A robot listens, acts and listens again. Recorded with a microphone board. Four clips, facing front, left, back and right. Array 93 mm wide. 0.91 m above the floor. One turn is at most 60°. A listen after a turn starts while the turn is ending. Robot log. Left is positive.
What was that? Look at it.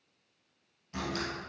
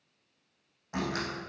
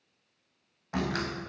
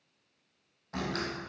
note: The door slam: 165° left.
cmd yaw +60
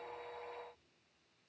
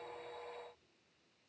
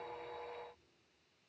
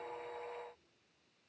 note: Nothing new. It was at 105° left.
cmd yaw +60
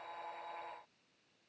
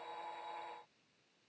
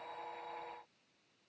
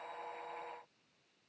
note: Nothing new. It was at 45° left.
cmd yaw +45
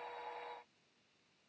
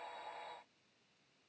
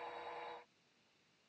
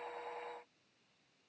end: I heard a door slam from this way, but can't make it out now.